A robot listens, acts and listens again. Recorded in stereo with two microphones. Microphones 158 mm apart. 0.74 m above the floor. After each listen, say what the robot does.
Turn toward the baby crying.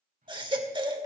Turn 30° right.
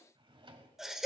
Found it: a baby crying, straight ahead.